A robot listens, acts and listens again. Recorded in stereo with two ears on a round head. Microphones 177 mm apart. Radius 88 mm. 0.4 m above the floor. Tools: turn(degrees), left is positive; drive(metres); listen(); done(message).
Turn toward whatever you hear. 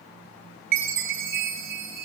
turn(degrees=-55)
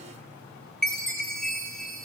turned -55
done("Found it: a chime, straight ahead.")